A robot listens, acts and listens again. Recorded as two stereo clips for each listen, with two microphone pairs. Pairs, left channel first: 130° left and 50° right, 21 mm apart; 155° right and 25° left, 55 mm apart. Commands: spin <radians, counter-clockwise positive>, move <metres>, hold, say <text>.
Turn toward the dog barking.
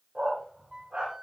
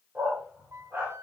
spin -0.61
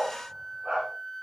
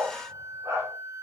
say Facing the dog barking.